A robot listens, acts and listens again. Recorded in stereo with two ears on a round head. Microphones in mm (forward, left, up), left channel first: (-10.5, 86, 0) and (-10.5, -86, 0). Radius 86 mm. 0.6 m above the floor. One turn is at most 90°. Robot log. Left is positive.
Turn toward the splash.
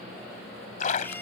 note: The splash: about 45° left or 135° left.
cmd yaw +45
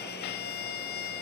cmd idle
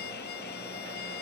end: I heard a splash, but can't make it out now. It was about straight ahead or 90° left.